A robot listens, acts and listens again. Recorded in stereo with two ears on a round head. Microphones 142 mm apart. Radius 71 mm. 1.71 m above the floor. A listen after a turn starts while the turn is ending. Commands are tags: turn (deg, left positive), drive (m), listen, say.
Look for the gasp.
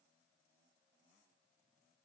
<listen/>
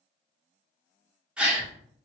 <turn deg="-30"/>
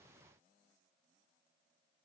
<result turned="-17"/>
<listen/>
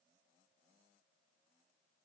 <say>I heard a gasp, but can't make it out now. It was about 10° left or 155° right.</say>